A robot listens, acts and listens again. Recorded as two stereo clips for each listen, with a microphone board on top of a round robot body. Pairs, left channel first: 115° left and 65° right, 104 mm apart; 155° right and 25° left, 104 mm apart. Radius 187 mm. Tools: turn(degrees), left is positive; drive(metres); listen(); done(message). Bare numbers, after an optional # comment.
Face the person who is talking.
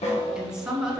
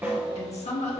# The woman speaking: 150° right.
turn(-150)
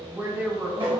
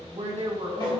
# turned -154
done("Facing the woman speaking.")